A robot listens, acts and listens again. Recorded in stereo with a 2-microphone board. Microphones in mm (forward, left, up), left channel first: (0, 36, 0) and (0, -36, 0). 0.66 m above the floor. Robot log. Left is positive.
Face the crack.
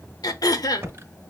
cmd idle
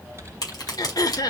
note: The crack: about 60° left or 120° left.
cmd yaw +60
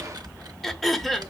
cmd idle
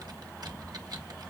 end: I heard a crack, but can't make it out now. It was about straight ahead or 60° left.